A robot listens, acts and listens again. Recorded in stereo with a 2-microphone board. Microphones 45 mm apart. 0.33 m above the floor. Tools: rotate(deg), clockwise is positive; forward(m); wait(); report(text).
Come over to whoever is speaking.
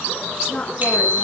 rotate(-25)
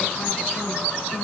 wait()
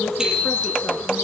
wait()
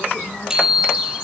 report("I heard a woman speaking, but can't make it out now. It was about straight ahead or 130° left. I did not reach it.")